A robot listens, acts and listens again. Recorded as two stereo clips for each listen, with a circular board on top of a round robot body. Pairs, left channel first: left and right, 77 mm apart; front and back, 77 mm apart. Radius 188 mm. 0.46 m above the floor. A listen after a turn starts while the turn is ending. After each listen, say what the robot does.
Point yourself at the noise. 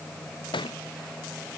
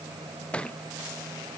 Turn 75° left.
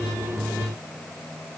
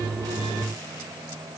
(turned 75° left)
Facing where the thud came from. I can't hear it now.